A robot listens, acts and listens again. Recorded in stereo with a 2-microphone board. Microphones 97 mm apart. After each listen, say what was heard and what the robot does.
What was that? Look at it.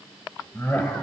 The laughter: about 15° left or 165° left. Turn 15° left.
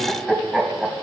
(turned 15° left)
Turn 30° right.
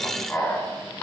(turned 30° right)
So it is at 15° left. Turn 15° left.
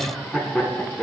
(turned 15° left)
Facing the laughter.